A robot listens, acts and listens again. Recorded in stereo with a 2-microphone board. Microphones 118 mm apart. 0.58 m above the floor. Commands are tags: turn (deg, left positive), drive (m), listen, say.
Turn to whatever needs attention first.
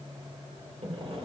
<listen/>
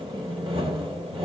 <listen/>
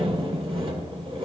<say>I can't make out anything urgent, only sawing.</say>